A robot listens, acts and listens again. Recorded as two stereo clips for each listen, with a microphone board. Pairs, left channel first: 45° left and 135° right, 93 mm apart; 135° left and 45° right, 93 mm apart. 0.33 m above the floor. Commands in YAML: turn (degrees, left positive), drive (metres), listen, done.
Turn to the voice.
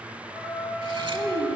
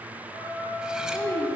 turn: -165
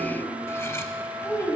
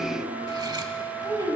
done: "Found it: a child speaking, straight ahead."